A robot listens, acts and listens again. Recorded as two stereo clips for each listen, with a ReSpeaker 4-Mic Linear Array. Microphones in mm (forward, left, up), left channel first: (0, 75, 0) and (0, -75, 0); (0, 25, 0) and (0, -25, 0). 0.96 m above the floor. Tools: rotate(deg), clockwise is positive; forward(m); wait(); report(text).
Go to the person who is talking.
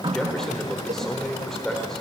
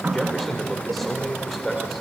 rotate(-30)
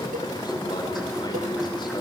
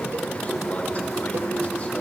wait()
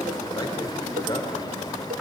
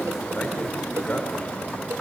rotate(-150)
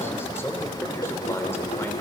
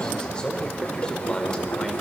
rotate(-15)
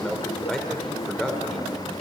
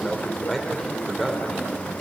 forward(1.0)
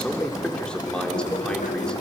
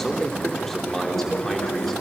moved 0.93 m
forward(1.0)
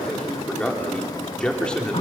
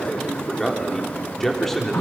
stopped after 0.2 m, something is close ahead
report("Blocked. The man speaking is further on, straight ahead.")